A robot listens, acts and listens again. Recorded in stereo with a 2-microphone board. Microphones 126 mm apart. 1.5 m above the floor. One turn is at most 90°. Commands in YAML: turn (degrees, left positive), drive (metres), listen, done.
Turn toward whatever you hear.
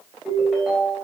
turn: 30
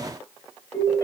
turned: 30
turn: 90
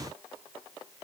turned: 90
turn: 65
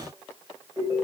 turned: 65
turn: -25
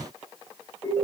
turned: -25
turn: 15
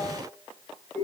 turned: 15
done: "Facing the ringtone, 2 to 4 m away."